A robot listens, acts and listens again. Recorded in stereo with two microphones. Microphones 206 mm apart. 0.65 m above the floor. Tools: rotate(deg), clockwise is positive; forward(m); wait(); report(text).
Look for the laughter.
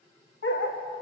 wait()
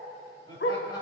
rotate(-20)
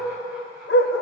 wait()
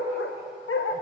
wait()
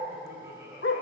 rotate(15)
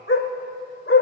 wait()
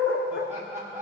rotate(15)
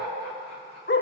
wait()
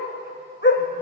wait()
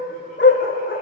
report("Facing where the laughter came from. I can't hear it now.")